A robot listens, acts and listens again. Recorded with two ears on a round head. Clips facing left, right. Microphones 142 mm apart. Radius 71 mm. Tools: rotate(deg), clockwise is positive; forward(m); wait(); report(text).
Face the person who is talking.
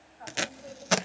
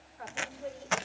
rotate(70)
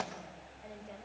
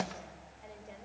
report("Facing the woman speaking, over 4 m away.")